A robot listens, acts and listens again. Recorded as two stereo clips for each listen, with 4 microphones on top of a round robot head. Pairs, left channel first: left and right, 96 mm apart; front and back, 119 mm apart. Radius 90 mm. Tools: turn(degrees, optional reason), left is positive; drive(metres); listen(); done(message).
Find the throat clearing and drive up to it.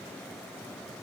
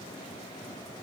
listen()
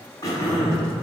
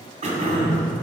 turn(degrees=150, reason="The throat clearing: 150° left.")
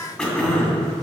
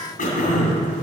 drive(metres=1.0)
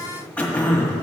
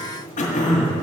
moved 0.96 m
turn(degrees=10, reason="The throat clearing is now 10° left.")
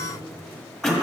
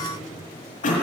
drive(metres=1.0)
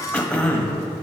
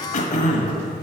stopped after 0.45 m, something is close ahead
turn(degrees=10, reason="The throat clearing is now 10° left.")
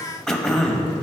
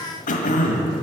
done("I am next to the throat clearing.")